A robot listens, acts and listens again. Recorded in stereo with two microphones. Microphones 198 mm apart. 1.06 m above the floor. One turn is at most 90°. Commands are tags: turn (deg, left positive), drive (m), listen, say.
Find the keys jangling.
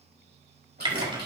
<turn deg="-55"/>
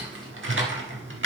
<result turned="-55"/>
<listen/>
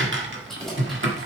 <say>Facing the keys jangling.</say>